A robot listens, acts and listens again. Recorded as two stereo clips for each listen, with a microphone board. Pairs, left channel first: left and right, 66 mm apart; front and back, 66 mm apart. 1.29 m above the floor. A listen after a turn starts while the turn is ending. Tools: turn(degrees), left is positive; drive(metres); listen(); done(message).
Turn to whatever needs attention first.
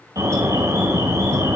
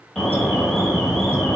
turn(degrees=-90)
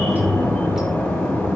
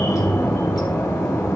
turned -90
turn(degrees=25)
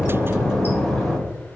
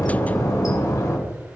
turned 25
done("Found it: an alarm, straight ahead, 2 to 4 m away.")